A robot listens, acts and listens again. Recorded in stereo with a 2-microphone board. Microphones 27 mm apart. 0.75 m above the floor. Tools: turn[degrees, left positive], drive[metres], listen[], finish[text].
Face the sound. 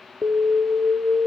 Thought: The alarm: about 65° right or 115° right.
Action: turn[-65]
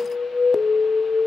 Action: finish[Found it: an alarm, straight ahead.]